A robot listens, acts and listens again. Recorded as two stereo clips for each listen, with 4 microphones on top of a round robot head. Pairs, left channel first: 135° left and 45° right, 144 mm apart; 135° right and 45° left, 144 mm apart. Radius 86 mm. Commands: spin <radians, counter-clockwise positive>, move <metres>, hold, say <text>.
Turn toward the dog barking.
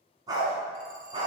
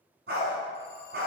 spin 0.26
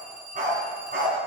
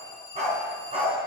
spin -0.17
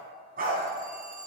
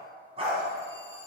spin -0.17
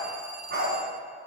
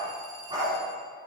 spin -0.35
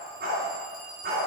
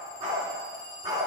spin -0.35
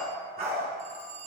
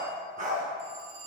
say Facing the dog barking, 2 to 4 m away.